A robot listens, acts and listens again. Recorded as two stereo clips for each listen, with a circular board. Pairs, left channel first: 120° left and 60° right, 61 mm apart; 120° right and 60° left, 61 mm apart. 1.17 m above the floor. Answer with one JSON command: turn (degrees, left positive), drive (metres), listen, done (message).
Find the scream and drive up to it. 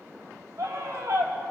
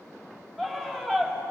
{"turn": -30}
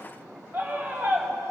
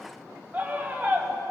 {"drive": 1.0}
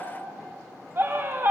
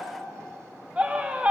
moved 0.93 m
{"turn": -10}
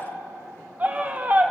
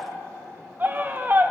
{"drive": 1.0}
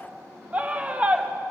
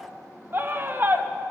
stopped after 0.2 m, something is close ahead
{"done": "Arrived at the scream, straight ahead."}